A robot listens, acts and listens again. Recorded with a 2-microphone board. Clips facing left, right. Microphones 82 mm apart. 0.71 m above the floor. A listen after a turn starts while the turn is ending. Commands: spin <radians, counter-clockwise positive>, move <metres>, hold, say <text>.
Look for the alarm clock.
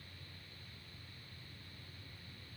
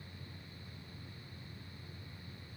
hold
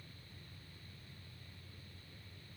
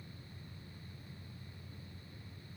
hold
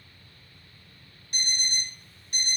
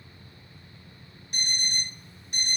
spin -0.35
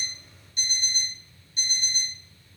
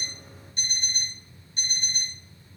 spin -2.53
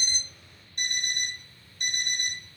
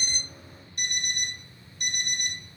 spin 0.70
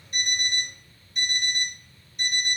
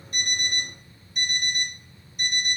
say Facing the alarm clock.